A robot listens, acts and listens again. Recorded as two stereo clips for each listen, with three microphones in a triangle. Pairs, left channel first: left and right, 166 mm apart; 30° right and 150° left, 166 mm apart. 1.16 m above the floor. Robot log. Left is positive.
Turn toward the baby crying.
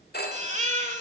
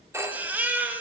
note: The baby crying: 130° right.
cmd yaw -130
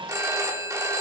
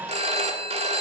cmd idle
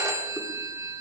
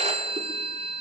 cmd idle
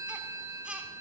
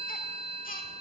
end: I heard a baby crying from this way, but can't make it out now.